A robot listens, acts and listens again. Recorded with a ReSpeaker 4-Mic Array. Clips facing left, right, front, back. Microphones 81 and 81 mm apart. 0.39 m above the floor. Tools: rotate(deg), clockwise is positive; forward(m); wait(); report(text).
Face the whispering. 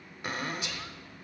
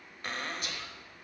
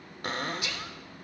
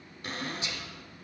rotate(125)
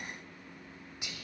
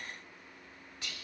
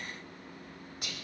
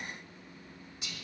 rotate(-20)
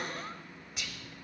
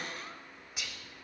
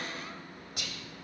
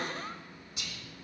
report("Found it: whispering, straight ahead.")